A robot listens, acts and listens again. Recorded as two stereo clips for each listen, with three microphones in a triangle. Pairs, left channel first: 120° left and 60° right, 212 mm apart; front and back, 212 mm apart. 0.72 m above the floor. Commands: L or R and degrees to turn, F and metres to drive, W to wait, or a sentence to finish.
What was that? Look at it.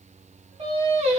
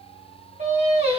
R115
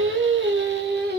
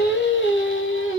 R20
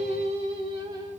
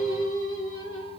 L15
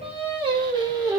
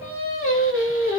L15
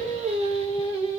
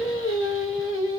Facing the singing.